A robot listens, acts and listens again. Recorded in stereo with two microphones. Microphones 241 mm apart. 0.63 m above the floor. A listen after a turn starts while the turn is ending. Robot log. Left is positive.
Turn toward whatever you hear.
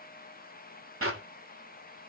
note: The clap: about 65° right or 115° right.
cmd yaw -65
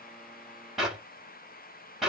end: Facing the clap.